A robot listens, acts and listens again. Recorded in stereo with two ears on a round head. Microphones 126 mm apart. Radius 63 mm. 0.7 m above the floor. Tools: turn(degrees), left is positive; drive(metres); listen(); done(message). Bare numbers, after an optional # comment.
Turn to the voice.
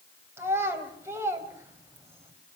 # The child speaking: about 15° right or 165° right.
turn(-15)
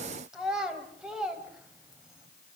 done("Facing the child speaking, 2 to 4 m away.")